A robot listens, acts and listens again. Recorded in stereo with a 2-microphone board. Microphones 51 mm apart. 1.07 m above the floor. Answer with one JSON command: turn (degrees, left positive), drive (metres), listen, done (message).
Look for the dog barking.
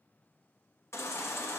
{"listen": true}
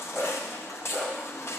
{"turn": 30}
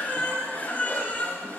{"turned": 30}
{"listen": true}
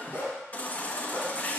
{"turn": 125}
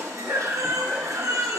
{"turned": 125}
{"listen": true}
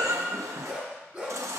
{"turn": -10}
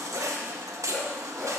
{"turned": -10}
{"listen": true}
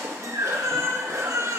{"listen": true}
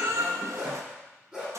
{"done": "Found it: a dog barking, straight ahead, over 4 m away."}